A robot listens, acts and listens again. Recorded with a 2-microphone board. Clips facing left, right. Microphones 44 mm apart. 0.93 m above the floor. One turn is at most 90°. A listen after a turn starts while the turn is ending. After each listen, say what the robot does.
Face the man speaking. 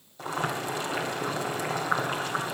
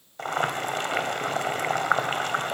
Keep listening.
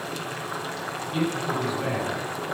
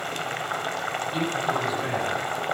Turn 30° left.
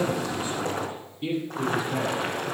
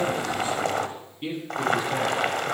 Turn 35° right.
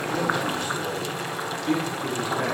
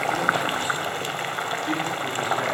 Found it: a man speaking, straight ahead.